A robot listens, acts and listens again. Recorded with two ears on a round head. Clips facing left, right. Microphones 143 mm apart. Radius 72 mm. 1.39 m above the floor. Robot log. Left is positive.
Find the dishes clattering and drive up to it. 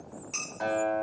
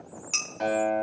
cmd yaw -90
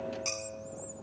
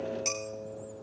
note: So it is at 10° right.
cmd yaw -10
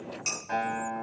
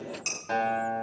cmd fwd 1.0
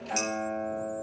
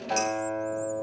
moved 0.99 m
cmd idle
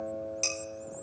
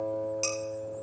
cmd fwd 1.0
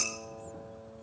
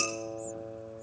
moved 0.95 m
cmd idle
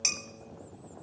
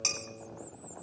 note: The dishes clattering is now 15° left.
cmd yaw +15
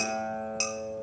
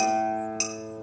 cmd fwd 1.0
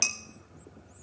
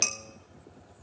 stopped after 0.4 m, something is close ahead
end: I am next to the dishes clattering.